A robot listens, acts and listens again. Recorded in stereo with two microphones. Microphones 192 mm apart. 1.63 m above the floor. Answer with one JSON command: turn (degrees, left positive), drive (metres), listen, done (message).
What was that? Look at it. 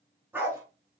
{"turn": -30}
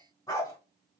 {"turn": 20}
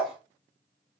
{"done": "Found it: a dog barking, straight ahead, over 4 m away."}